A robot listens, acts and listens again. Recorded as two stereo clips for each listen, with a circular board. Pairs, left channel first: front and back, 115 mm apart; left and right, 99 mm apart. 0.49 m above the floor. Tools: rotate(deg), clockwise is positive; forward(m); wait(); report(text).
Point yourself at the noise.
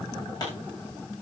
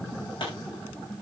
rotate(-55)
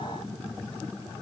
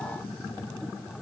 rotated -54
report("Facing where the pop came from. I can't hear it now.")